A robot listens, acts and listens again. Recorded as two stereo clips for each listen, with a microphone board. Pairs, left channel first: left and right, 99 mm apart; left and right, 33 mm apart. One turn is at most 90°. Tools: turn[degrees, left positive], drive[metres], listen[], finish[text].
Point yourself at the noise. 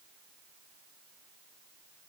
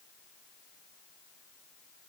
Action: listen[]
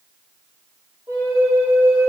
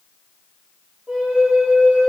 Thought: The flute: about 25° right or 155° right.
Action: turn[-25]
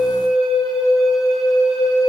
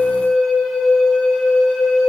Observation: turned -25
Action: finish[Facing the flute.]